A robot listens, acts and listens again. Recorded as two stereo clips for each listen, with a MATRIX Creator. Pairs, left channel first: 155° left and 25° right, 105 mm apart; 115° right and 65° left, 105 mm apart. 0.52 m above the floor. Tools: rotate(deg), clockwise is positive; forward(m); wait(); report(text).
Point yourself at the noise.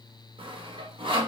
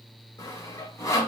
rotate(55)
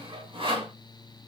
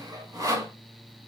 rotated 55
rotate(-15)
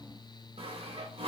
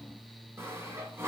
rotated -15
report("Found it: sawing, straight ahead.")